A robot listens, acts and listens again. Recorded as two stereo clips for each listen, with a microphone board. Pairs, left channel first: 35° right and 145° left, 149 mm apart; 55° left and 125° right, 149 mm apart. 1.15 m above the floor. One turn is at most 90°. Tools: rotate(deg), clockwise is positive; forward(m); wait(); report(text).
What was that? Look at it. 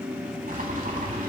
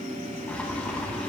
rotate(-90)
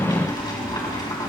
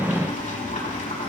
rotate(-25)
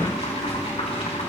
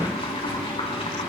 report("Found it: boiling, straight ahead.")